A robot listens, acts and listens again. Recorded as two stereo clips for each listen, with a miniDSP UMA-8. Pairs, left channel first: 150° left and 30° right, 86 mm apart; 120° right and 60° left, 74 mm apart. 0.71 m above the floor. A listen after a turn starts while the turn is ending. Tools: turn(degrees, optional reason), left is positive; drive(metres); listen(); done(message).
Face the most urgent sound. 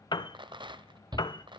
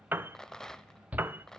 turn(degrees=-10, reason="The shout: 10° right.")
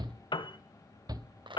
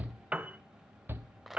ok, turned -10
done("Facing the shout, 1 to 2 m away.")